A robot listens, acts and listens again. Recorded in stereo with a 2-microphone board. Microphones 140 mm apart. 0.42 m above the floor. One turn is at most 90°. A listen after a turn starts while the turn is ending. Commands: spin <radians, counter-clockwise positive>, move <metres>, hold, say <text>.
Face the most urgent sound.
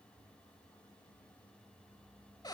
hold
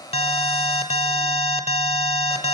spin 0.79
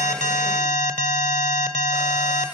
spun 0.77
spin 1.40
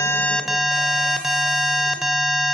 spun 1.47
say Found it: an alarm, straight ahead.